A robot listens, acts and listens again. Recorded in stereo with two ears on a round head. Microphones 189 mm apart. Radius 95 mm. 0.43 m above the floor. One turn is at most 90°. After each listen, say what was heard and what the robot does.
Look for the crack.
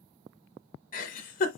Keep listening.
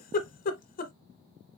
Keep listening.
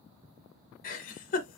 I can't make out a crack, only a giggle.